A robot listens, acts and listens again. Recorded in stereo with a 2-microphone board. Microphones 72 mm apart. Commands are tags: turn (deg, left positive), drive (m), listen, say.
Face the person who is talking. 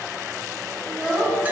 <turn deg="30"/>
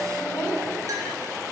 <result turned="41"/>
<turn deg="135"/>
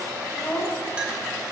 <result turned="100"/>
<turn deg="35"/>
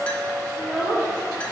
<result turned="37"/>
<say>Found it: a child speaking, straight ahead.</say>